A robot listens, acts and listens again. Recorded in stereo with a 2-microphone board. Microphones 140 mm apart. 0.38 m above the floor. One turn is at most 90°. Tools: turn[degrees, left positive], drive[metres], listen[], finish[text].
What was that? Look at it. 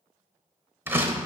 Thought: The door slam: about 15° right or 165° right.
Action: turn[-15]
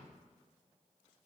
Action: listen[]
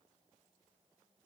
Action: finish[I heard a door slam, but can't make it out now. It was about straight ahead or 150° right.]